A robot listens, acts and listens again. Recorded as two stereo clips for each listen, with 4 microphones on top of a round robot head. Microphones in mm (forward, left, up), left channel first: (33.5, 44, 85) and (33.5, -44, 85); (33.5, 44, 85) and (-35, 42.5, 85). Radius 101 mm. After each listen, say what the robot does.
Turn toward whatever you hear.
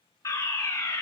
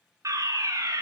Turn 145° left.
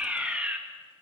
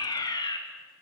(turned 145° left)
Turn 15° right.
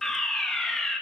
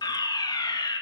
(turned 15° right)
Found it: a fire alarm, straight ahead.